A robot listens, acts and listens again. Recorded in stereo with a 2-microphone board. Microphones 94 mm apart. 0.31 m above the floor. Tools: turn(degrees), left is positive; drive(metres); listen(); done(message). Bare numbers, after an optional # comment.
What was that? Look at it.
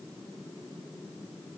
listen()
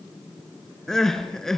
turn(30)
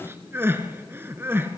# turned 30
# So it is at 25° right.
turn(-25)
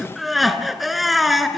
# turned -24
done("Found it: crying, straight ahead, 1 to 2 m away.")